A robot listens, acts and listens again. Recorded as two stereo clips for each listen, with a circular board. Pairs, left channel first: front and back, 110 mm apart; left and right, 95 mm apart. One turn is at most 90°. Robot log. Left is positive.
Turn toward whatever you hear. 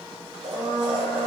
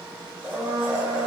note: The blender: 170° right.
cmd yaw -90
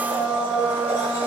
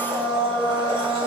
note: The blender is now 110° right.
cmd yaw -90
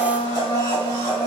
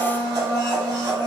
note: The blender is now 45° right.
cmd yaw -45
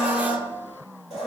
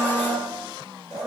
note: The blender is now 15° right.
cmd yaw -15
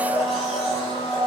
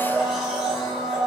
end: Found it: a blender, straight ahead, 1 to 2 m away.